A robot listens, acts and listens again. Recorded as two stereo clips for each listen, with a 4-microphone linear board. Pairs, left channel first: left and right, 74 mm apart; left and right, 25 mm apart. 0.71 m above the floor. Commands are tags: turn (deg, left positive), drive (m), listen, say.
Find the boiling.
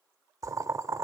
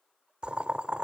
<turn deg="-50"/>
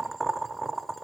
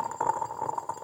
<say>Found it: boiling, straight ahead.</say>